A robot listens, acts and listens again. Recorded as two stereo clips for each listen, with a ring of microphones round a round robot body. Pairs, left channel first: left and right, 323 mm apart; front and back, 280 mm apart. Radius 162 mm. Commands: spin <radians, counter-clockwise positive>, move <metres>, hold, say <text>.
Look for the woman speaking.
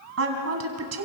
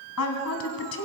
spin -0.87
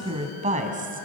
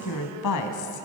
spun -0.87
spin -0.44
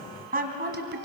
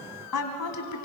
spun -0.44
spin -0.61
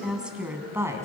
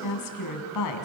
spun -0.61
spin -0.17
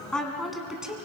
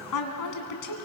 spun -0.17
say Found it: a woman speaking, straight ahead, 2 to 4 m away.